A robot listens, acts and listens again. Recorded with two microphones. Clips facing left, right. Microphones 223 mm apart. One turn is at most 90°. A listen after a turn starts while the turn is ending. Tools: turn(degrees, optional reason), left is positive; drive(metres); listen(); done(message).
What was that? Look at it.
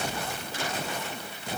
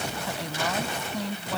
turn(degrees=-90)
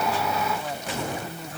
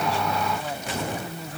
done("Facing the woman speaking.")